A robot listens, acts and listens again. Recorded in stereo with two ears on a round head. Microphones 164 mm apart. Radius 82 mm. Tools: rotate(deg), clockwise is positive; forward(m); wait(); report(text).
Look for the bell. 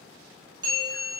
rotate(25)
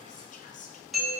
report("Facing the bell.")